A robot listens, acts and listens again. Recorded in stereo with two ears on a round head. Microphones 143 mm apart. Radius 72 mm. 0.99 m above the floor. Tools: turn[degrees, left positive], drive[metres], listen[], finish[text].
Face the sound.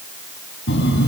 Action: turn[90]
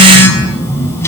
Thought: So it is at 15° left.
Action: turn[15]
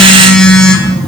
Action: finish[Facing the phone buzzing.]